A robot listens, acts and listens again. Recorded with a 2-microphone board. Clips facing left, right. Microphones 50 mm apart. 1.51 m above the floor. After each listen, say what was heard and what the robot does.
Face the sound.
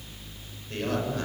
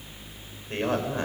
The man speaking: about 30° right or 150° right. Turn 30° right.
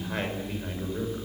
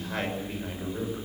Found it: a man speaking, straight ahead, over 4 m away.